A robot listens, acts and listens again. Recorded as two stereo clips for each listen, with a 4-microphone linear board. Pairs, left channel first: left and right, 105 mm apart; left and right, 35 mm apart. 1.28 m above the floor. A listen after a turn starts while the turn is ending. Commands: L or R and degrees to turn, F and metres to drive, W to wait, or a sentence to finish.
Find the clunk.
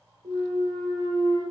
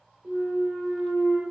R70
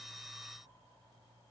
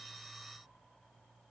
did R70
W
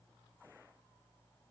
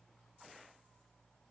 I heard a clunk, but can't make it out now. It was about straight ahead or 40° right.